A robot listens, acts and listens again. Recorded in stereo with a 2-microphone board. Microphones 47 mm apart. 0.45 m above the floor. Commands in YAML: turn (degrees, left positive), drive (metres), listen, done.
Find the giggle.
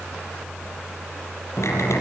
listen: true
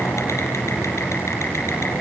listen: true
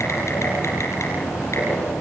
done: "I can't make out a giggle, only typing on a keyboard."